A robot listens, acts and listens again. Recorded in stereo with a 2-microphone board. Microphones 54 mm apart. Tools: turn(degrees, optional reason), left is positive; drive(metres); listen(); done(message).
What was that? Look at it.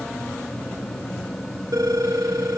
turn(degrees=-90)
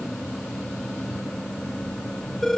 done("Found it: a phone ringing, straight ahead.")